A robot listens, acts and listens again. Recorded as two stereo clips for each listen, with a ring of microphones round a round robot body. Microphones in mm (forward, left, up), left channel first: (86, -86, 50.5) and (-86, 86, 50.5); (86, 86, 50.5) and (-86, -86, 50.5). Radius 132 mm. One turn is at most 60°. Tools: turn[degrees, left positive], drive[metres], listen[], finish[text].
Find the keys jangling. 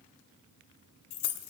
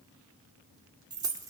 Thought: The keys jangling: 60° right.
Action: turn[-60]
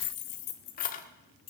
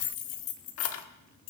Thought: The keys jangling is now 25° left.
Action: turn[25]
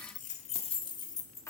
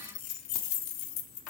Thought: The keys jangling is now 35° left.
Action: turn[35]
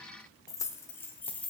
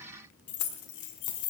Thought: The keys jangling is now 40° left.
Action: turn[40]
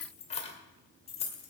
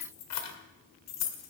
Thought: The keys jangling is now 20° left.
Action: turn[20]
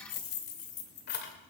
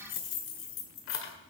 Action: finish[Found it: keys jangling, straight ahead, 2 to 4 m away.]